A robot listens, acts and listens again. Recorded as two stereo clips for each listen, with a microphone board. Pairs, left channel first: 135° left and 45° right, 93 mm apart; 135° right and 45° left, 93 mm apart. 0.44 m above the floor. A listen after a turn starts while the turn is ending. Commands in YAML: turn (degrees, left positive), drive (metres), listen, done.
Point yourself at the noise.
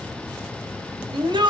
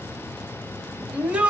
turn: -30
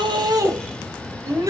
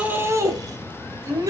done: "Found it: a shout, straight ahead."